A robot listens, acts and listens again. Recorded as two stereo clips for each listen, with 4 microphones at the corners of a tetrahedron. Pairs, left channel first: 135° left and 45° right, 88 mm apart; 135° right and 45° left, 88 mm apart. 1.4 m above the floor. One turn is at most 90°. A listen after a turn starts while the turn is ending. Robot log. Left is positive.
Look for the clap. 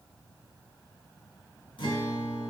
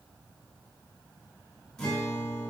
cmd idle
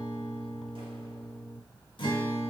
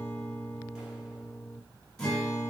cmd idle
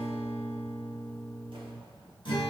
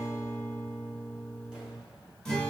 end: I can't make out a clap to turn to.